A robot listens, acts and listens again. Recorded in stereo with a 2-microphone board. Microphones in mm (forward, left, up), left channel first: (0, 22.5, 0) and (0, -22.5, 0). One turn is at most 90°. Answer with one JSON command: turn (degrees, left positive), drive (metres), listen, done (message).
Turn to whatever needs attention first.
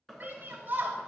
{"turn": -50}
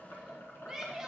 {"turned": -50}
{"turn": -20}
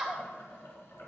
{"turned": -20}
{"done": "Facing the shout, 1 to 2 m away."}